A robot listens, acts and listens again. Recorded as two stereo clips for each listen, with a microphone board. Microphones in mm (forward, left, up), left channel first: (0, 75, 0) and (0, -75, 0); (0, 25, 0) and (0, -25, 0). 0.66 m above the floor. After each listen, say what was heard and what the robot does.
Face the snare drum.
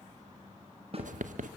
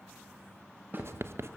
The snare drum: about 40° right or 140° right. Turn 40° right.
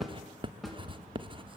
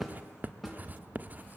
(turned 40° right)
Facing the snare drum.